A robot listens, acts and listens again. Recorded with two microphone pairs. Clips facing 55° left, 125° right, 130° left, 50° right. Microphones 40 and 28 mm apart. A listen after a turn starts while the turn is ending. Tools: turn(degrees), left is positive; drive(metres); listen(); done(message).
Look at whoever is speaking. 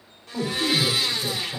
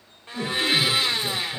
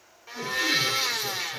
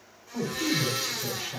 turn(degrees=10)
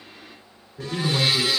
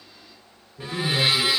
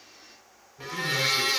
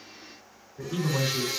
done("Facing the man speaking.")